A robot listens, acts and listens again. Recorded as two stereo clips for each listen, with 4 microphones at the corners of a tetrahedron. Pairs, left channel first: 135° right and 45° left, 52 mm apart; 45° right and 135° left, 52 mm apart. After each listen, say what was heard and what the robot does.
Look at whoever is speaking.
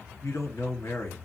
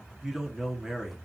The man speaking: 145° right. Turn 145° right.
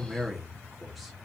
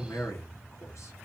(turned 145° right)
The man speaking is now 45° right. Turn 45° right.
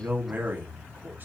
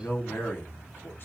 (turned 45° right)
Found it: a man speaking, straight ahead.